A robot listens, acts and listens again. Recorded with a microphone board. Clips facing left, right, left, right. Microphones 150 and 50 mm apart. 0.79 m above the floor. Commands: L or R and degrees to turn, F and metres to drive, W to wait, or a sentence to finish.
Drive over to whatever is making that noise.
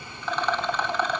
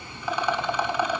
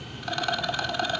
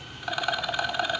R30
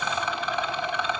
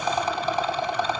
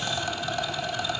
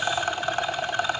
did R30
R140
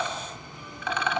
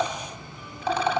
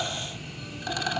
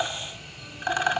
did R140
R35
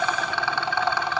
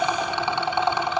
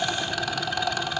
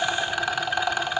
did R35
R20
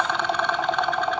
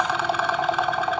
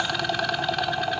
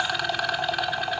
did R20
F1.0
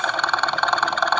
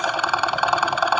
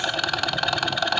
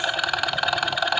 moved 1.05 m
R10
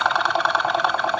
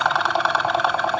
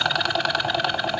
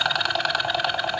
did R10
F1.0
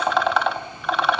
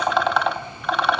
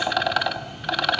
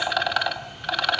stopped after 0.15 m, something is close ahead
Arrived at the rattle, straight ahead.